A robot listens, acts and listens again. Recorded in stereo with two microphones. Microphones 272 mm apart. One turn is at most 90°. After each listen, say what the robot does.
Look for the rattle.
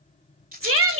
Turn 35° right.
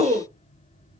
Keep listening.
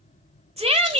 Keep listening.
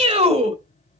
I heard a rattle, but can't make it out now. It was about straight ahead or 110° right.